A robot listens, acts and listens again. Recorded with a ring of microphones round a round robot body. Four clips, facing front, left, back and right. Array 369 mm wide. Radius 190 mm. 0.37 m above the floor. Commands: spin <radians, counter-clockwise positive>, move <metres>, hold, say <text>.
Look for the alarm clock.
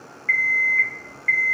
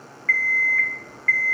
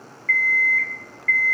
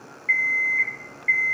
spin 1.13
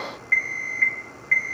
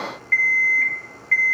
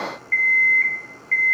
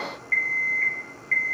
spin 0.44
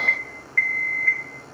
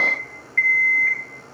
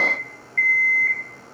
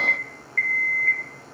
spin 0.35
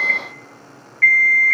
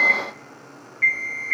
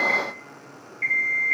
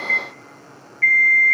say Found it: an alarm clock, straight ahead.